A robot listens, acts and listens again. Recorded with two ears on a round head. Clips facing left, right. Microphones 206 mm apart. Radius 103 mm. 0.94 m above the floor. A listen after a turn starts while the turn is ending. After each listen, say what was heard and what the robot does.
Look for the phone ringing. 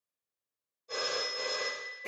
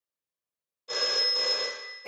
Turn 90° right.
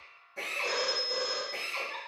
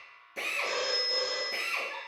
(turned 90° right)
Found it: a phone ringing, straight ahead, under 1 m away.